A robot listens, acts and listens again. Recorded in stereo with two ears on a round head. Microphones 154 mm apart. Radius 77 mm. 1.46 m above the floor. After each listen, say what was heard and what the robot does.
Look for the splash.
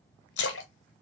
Turn 90° left.
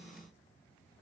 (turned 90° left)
I heard a splash from this way, but can't make it out now.